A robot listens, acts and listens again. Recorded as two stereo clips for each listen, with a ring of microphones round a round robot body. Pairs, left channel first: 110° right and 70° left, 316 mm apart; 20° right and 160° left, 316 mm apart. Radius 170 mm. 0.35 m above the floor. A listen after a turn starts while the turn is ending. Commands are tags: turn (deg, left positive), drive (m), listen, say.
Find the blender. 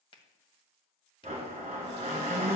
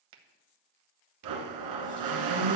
<turn deg="140"/>
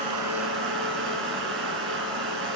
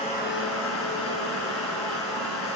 <turn deg="25"/>
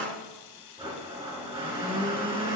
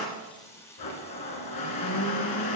<say>Found it: a blender, straight ahead.</say>